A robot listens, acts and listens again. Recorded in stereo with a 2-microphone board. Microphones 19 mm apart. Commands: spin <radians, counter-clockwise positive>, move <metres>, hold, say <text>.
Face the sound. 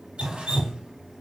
spin -1.22
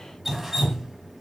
spin -0.35
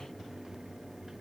hold
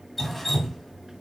say Found it: dripping, straight ahead.